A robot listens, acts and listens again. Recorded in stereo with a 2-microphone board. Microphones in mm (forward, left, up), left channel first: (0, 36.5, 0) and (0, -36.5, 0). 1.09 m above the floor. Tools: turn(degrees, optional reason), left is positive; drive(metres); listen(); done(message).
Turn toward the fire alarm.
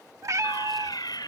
turn(degrees=70, reason="The fire alarm: about 70° left or 110° left.")
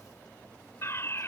turn(degrees=35, reason="So it is at 35° left.")
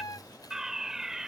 done("Facing the fire alarm.")